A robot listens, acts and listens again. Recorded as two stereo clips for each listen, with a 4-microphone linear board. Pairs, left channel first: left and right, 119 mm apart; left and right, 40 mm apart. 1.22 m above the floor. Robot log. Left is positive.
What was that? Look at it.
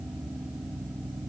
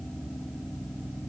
cmd idle
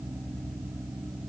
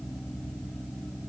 cmd idle
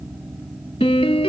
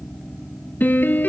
note: The piano: about 55° left or 125° left.
cmd yaw +55
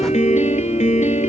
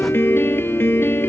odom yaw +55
note: So it is at 70° left.
cmd yaw +70
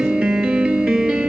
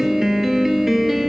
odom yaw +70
note: The piano is now 10° right.
cmd yaw -10
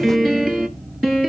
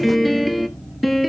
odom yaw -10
end: Facing the piano, 2 to 4 m away.